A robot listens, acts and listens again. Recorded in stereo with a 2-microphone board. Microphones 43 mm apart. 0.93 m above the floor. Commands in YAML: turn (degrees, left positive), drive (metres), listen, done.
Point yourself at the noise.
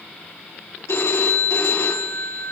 turn: 90
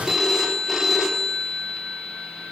done: "Facing the phone ringing."